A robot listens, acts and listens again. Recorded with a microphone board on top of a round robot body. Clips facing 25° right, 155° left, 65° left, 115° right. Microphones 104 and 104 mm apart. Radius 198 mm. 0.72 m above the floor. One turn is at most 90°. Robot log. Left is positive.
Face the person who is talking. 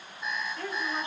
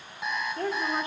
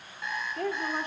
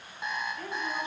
note: The woman speaking: 100° left.
cmd yaw +90
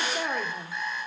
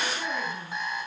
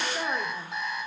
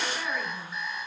note: The woman speaking is now 10° left.
cmd yaw +10
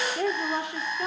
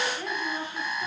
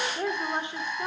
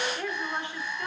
end: Found it: a woman speaking, straight ahead.